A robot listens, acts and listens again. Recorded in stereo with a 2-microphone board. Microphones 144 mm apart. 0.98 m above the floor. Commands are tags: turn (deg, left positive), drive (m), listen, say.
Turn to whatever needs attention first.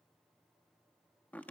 <listen/>
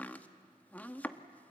<listen/>
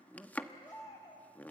<turn deg="25"/>
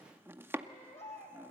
<turn deg="130"/>
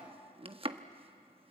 <listen/>
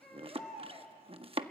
<say>Facing the baby crying, over 4 m away.</say>